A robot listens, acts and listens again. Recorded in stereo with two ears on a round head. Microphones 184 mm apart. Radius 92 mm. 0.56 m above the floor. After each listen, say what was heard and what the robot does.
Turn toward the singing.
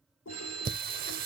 The singing: about 45° right or 135° right. Turn 45° right.
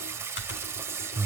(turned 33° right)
So it is at 10° right. Turn 10° right.
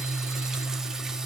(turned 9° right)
Found it: singing, straight ahead.